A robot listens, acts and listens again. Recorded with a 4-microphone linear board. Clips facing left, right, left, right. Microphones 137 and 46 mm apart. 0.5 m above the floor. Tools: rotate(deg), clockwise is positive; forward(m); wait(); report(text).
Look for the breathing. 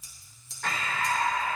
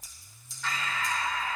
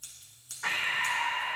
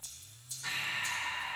rotate(-55)
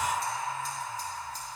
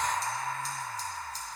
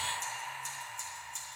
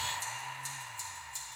rotate(-15)
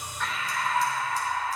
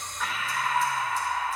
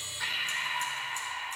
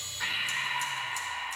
report("Found it: breathing, straight ahead.")